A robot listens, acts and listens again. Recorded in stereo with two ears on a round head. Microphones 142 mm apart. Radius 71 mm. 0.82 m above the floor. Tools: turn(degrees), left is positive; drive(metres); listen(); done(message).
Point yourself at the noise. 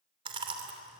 turn(degrees=-35)
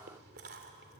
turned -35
turn(degrees=-110)
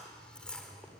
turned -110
done("Found it: chewing, straight ahead, 2 to 4 m away.")